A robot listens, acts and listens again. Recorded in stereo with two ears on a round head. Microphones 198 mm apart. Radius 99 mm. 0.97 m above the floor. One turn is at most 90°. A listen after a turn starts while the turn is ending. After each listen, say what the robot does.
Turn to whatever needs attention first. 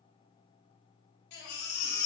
Turn 65° left.
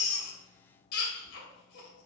Turn 50° left.
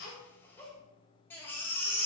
Turn 10° left.
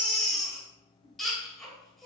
Found it: a baby crying, straight ahead.